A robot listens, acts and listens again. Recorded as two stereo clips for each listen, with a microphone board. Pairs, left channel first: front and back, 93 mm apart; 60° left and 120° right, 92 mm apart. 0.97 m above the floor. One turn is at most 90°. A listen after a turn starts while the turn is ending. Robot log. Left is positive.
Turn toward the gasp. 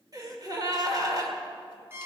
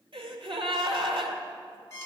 note: The gasp: 135° right.
cmd yaw -90
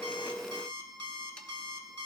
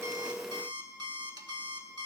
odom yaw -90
note: Nothing new. It was at 45° right.
cmd yaw -45
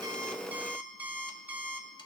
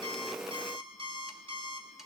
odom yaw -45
end: Facing where the gasp came from. I can't hear it now.